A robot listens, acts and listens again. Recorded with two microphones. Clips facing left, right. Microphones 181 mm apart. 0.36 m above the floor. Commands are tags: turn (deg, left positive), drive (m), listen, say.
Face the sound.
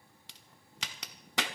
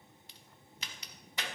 <turn deg="90"/>
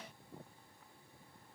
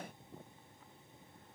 <say>I heard a crack from this way, but can't make it out now.</say>